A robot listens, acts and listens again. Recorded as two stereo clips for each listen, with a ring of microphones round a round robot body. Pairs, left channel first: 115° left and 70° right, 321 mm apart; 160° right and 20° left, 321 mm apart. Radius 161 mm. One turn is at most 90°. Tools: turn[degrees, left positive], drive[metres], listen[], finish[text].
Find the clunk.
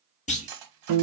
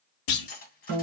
Thought: The clunk: straight behind.
Action: turn[90]
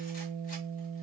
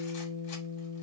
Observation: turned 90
Thought: Nothing new. It was at 90° left.
Action: turn[90]
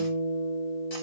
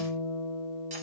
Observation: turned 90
Action: finish[Facing where the clunk came from. I can't hear it now.]